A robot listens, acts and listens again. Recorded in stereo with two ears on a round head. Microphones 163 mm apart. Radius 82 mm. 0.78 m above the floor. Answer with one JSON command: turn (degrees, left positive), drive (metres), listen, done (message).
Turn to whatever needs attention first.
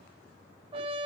{"listen": true}
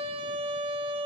{"listen": true}
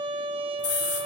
{"turn": 70}
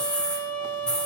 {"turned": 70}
{"done": "Found it: a scream, straight ahead."}